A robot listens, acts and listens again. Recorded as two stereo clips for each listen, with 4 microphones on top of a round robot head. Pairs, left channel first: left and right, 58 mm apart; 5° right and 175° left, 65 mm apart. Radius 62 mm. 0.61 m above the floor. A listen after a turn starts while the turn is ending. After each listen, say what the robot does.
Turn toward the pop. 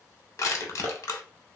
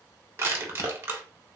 Keep listening.
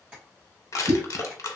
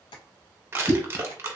Turn 60° right.
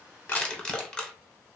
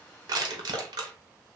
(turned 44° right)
Turn 15° right.
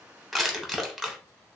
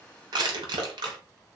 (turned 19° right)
I heard a pop from this way, but can't make it out now.